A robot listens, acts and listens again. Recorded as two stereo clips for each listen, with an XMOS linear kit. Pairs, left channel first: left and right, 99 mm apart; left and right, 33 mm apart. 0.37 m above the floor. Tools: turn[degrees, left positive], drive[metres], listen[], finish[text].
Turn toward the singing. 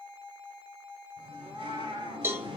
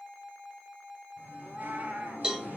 Thought: The singing: about 70° right or 110° right.
Action: turn[-70]
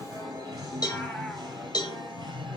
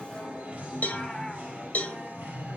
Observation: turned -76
Thought: So it is at 55° right.
Action: turn[-55]
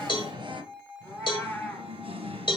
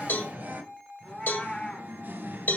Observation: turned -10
Thought: The singing is now 70° right.
Action: turn[-70]
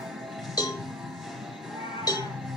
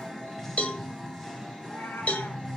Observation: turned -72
Action: finish[Found it: singing, straight ahead.]